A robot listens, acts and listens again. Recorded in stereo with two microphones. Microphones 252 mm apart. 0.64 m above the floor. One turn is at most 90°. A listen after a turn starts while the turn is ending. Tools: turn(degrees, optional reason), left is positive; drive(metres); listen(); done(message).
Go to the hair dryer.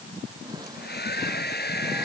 turn(degrees=40, reason="The hair dryer: about 40° left or 140° left.")
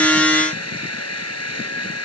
turn(degrees=90, reason="So it is at 100° left.")
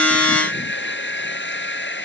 turn(degrees=50, reason="The hair dryer is now 50° left.")
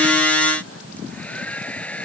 drive(metres=1.0)
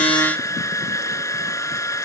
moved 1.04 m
turn(degrees=10, reason="The hair dryer is now 10° left.")
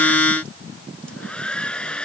drive(metres=1.0)
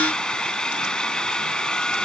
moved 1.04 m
drive(metres=1.0)
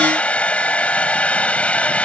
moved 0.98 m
drive(metres=1.0)
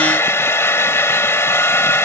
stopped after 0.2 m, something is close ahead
turn(degrees=10, reason="The hair dryer is now 10° left.")
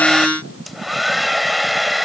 done("Arrived at the hair dryer, straight ahead.")